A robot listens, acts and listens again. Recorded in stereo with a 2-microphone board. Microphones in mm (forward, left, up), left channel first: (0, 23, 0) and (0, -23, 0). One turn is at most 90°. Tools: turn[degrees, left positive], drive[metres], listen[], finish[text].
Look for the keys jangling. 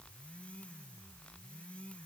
Action: listen[]
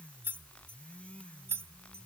Action: turn[-90]
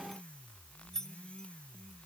Thought: So it is at 15° left.
Action: turn[15]
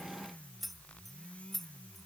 Action: finish[Facing the keys jangling.]